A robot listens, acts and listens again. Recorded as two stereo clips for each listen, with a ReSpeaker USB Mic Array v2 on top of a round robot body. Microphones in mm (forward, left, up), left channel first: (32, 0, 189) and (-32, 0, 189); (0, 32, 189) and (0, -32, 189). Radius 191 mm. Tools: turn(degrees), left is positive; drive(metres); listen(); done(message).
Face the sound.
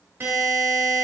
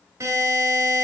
turn(degrees=-130)
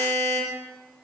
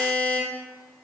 turn(degrees=25)
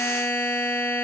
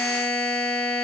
turn(degrees=10)
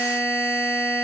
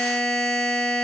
done("Facing the buzzer.")